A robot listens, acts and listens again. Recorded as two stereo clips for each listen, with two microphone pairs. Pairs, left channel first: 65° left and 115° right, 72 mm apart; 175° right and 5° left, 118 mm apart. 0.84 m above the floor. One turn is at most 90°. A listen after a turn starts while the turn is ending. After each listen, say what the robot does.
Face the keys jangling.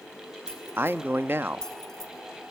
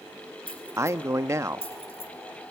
Turn 90° left.
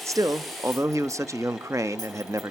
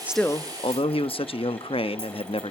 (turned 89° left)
Turn 60° left.
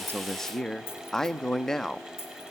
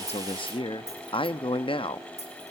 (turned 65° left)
Turn 20° left.
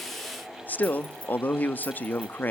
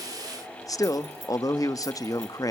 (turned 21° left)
Keep listening.
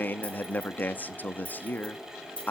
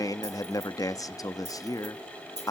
Facing the keys jangling, over 4 m away.